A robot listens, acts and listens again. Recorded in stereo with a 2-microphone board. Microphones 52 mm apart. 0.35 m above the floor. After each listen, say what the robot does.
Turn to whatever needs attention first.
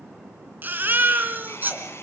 Turn 35° right.
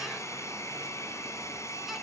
Keep listening.
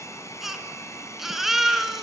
Facing the baby crying.